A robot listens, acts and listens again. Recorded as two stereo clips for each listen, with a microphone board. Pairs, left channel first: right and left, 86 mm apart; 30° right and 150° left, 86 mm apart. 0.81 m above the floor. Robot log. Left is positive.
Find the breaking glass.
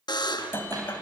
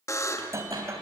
note: The breaking glass: 155° right.
cmd yaw -155
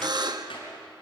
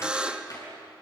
end: I heard breaking glass from this way, but can't make it out now.